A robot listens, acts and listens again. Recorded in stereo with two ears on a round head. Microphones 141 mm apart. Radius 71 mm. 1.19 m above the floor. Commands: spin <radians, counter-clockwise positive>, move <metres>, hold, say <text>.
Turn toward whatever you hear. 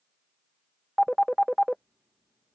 spin 0.52
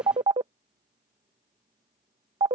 spin -0.52
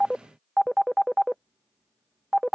say Found it: a phone ringing, straight ahead.